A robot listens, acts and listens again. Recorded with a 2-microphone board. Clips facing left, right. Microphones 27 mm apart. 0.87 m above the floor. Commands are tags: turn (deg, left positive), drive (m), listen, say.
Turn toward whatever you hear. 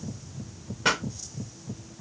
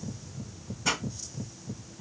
<turn deg="90"/>
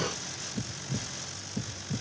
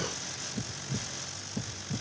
<say>I heard a pop from this way, but can't make it out now.</say>